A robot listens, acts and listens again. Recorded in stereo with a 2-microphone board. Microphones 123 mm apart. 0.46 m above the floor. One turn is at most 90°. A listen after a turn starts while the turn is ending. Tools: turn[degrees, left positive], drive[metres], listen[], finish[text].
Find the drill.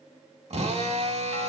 Thought: The drill: about 60° right or 120° right.
Action: turn[-60]
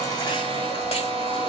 Thought: So it is at 55° right.
Action: turn[-55]
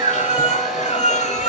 Action: listen[]
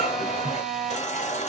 Action: finish[Facing the drill, 1 to 2 m away.]